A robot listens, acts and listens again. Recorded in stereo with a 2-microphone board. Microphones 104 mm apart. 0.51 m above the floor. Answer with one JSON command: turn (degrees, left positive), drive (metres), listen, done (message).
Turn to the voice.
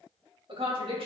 {"turn": -60}
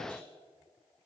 {"listen": true}
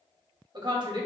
{"turn": -50}
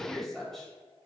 {"done": "Found it: a woman speaking, straight ahead."}